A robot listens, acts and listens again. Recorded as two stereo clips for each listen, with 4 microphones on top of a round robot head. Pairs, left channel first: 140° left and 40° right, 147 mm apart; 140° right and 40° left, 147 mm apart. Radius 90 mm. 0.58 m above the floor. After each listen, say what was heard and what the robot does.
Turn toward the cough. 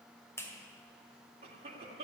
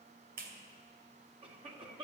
Found it: a cough, straight ahead, 2 to 4 m away.